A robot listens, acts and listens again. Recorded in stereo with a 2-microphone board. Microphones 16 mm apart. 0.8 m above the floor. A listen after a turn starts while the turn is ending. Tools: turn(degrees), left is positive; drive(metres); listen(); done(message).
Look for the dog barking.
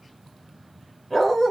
turn(degrees=35)
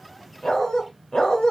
turn(degrees=100)
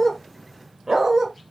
turn(degrees=-45)
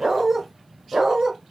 turn(degrees=-45)
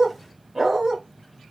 turn(degrees=-35)
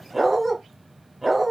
turn(degrees=-10)
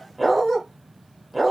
done("Found it: a dog barking, straight ahead.")